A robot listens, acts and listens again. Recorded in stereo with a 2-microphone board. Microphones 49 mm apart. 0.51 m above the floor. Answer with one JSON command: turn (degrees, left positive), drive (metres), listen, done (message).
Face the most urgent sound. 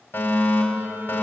{"turn": 60}
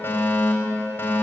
{"turn": 55}
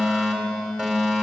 {"turn": -20}
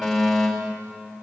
{"done": "Found it: a fire alarm, straight ahead."}